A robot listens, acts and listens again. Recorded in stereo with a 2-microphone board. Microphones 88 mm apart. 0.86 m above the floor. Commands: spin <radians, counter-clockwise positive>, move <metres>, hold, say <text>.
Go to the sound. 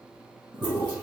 spin -1.05
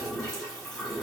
move 1.0
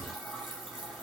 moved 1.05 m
move 1.0
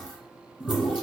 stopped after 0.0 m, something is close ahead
say I am next to the toilet flushing.